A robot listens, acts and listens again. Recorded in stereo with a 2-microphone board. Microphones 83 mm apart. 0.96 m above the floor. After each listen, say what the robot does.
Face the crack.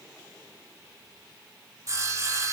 Keep listening.
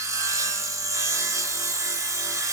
Keep listening.
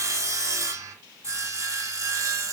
I can't make out a crack to turn to.